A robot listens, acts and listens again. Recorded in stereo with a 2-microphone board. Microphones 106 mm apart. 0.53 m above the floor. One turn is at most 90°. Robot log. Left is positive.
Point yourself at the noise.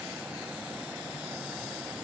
cmd idle
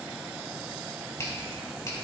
note: The finger snap: about 30° left or 150° left.
cmd yaw +30
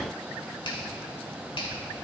note: So it is at 115° left.
cmd yaw +90
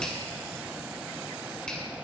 note: The finger snap is now 10° left.
cmd yaw +10
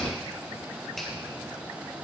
end: Found it: a finger snap, straight ahead.